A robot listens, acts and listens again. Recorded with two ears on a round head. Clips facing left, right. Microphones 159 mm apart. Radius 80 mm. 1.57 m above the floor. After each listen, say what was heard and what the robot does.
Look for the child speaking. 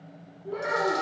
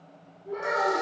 The child speaking: about 40° left or 140° left. Turn 40° left.
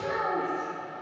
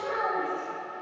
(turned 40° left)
So it is at 125° left. Turn 125° left.
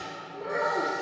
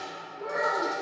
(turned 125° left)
The child speaking is now 55° left. Turn 55° left.
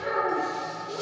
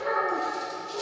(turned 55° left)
The child speaking is now 35° left. Turn 35° left.
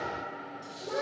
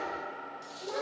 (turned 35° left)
The child speaking is now 10° left. Turn 10° left.
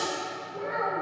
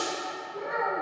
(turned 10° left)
Facing the child speaking.